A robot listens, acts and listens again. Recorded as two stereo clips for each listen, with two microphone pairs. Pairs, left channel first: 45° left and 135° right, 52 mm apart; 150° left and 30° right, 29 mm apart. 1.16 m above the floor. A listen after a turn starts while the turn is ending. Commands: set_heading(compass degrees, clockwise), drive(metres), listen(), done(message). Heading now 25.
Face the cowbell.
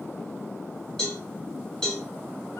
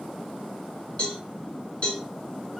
set_heading(270)
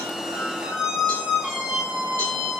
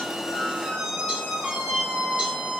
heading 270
listen()
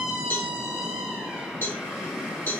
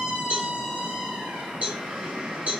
done("Facing the cowbell.")